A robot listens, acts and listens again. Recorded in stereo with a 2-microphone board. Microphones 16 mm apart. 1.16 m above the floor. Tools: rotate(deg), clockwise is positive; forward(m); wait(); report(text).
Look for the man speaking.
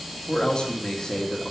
rotate(-65)
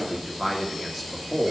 report("Found it: a man speaking, straight ahead.")